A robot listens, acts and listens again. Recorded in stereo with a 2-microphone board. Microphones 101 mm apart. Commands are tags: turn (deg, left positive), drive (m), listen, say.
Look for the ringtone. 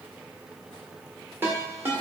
<turn deg="-20"/>
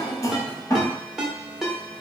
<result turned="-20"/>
<say>Found it: a ringtone, straight ahead, 1 to 2 m away.</say>